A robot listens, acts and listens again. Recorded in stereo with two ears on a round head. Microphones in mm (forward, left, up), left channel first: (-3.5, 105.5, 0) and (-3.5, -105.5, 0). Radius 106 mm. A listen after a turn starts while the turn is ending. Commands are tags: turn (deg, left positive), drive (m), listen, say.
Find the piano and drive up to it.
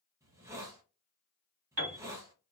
<turn deg="-60"/>
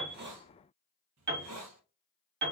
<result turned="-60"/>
<turn deg="-50"/>
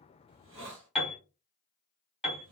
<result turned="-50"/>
<drive m="1.0"/>
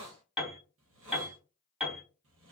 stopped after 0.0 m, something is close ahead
<say>Something is in my way. I am facing the piano but have not reached it.</say>